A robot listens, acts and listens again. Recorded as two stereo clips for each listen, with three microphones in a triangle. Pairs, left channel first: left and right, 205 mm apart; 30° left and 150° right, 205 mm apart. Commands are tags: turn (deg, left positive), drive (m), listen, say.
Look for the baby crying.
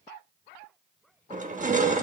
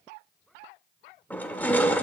<listen/>
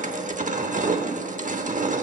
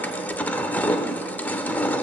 <listen/>
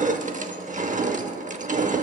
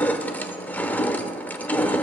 <say>I can't make out a baby crying, only crushing.</say>